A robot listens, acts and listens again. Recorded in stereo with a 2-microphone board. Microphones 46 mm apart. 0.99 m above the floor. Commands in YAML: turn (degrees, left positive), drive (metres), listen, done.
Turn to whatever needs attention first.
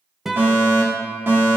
turn: -55
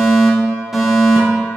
turn: -10
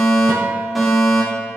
done: "Found it: a fire alarm, straight ahead, 2 to 4 m away."